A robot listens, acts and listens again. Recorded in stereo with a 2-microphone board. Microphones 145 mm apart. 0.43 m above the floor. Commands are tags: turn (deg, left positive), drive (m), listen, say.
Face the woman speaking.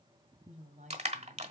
<turn deg="-55"/>
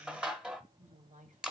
<turn deg="-65"/>
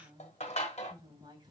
<turn deg="-30"/>
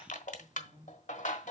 <say>Facing the woman speaking, 2 to 4 m away.</say>